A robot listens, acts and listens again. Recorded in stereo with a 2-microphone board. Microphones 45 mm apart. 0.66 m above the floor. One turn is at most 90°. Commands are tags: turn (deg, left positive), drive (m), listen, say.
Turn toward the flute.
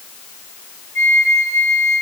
<turn deg="55"/>
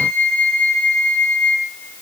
<turn deg="40"/>
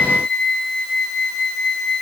<turn deg="15"/>
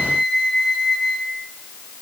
<say>Facing the flute.</say>